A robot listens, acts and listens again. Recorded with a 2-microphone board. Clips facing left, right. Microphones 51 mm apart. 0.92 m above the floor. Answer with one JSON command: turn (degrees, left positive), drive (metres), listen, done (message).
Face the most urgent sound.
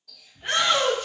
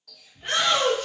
{"turn": 30}
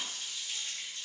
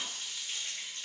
{"listen": true}
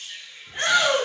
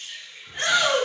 {"turn": 140}
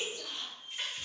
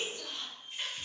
{"listen": true}
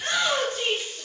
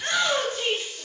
{"turn": 15}
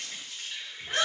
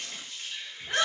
{"done": "Found it: a shout, straight ahead."}